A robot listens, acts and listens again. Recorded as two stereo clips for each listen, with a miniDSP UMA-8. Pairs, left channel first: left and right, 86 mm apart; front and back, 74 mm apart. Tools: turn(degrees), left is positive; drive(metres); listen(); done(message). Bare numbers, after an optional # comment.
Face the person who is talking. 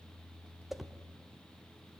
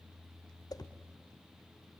listen()
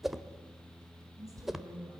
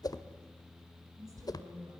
# The woman speaking: 140° right.
turn(-140)
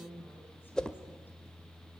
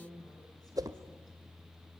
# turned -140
# The woman speaking is now 25° left.
turn(25)
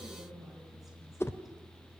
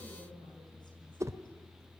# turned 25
listen()
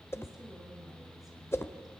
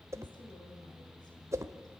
listen()
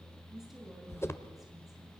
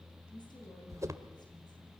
done("Found it: a woman speaking, straight ahead, over 4 m away.")